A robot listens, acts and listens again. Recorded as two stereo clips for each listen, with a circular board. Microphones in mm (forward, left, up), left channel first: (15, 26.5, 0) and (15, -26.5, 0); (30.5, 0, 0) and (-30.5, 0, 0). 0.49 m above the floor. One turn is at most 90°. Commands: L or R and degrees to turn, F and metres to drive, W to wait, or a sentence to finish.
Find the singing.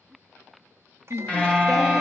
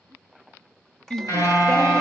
L75
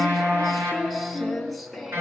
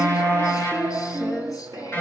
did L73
Facing the singing.